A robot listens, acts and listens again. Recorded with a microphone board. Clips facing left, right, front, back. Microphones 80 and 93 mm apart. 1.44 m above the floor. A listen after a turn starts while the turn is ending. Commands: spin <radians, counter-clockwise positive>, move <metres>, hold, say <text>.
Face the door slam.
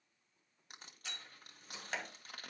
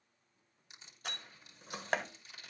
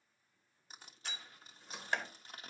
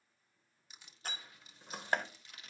spin -2.27
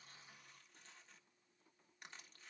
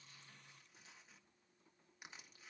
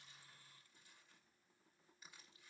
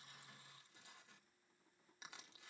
say I heard a door slam from this way, but can't make it out now.